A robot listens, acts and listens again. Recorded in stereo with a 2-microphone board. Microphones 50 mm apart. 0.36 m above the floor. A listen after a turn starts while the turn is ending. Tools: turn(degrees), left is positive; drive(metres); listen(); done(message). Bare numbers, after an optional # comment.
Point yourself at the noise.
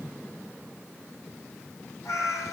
turn(90)
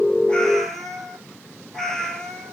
# So it is at 10° left.
turn(10)
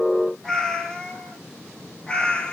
# The cat meowing is now 15° left.
turn(15)
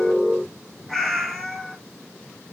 done("Facing the cat meowing, 2 to 4 m away.")